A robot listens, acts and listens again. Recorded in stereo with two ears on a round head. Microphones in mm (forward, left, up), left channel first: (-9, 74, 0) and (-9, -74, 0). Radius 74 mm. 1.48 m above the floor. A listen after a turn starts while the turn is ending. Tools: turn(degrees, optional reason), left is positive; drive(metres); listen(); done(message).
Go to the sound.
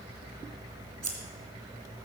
turn(degrees=-15, reason="The scissors: about 15° right or 165° right.")
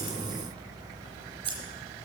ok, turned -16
turn(degrees=-150, reason="So it is at 150° right.")
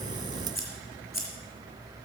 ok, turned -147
drive(metres=1.0)
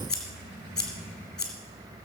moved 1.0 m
drive(metres=1.0)
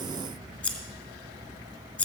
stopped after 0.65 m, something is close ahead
turn(degrees=15, reason="The scissors is now 15° left.")
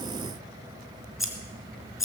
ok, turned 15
done("I am next to the scissors.")